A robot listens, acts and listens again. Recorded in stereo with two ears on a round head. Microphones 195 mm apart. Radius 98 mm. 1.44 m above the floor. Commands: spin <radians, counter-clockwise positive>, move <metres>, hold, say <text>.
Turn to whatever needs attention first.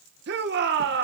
spin -0.87
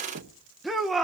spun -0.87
say Found it: a shout, straight ahead, 1 to 2 m away.